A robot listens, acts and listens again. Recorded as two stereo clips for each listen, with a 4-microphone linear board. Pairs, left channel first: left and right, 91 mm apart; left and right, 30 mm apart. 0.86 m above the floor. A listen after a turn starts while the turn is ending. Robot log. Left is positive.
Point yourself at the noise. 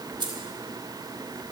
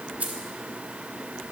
note: The keys jangling: about 55° right or 125° right.
cmd yaw -55
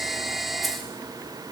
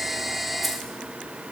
cmd idle
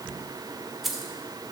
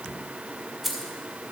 end: Found it: keys jangling, straight ahead, 2 to 4 m away.